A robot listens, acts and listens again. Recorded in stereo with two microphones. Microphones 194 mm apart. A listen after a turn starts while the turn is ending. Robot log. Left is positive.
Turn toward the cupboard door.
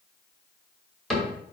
cmd yaw +30
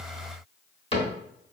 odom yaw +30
note: So it is at 145° left.
cmd yaw +145
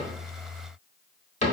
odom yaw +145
note: The cupboard door is now 40° left.
cmd yaw +40
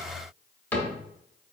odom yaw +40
note: The cupboard door is now 10° left.
cmd yaw +10
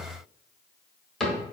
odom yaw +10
end: Facing the cupboard door, 1 to 2 m away.